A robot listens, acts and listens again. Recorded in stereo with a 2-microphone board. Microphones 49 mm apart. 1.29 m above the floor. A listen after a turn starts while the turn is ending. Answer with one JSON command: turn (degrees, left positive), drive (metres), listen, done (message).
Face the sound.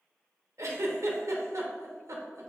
{"turn": -90}
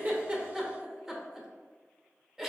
{"done": "Found it: a giggle, straight ahead, under 1 m away."}